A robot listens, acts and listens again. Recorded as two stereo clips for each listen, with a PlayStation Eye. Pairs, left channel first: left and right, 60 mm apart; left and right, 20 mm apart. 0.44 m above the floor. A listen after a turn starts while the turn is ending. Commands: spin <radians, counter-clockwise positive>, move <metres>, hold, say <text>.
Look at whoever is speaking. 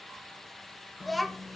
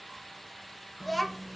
spin 0.52
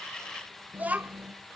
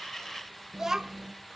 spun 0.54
spin -0.52
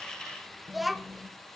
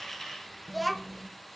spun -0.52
say Found it: a child speaking, straight ahead, 1 to 2 m away.